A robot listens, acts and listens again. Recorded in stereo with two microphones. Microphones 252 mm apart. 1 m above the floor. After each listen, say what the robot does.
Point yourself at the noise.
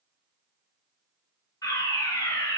Turn 30° left.
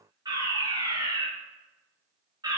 Turn 15° right.
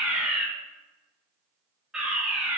Found it: a fire alarm, straight ahead.